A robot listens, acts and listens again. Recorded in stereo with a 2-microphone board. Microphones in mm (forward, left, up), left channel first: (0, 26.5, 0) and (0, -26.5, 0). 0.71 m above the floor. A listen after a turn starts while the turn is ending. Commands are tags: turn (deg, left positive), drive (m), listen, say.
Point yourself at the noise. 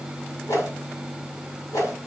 <turn deg="90"/>
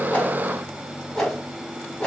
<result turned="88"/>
<say>Found it: a whoosh, straight ahead, over 4 m away.</say>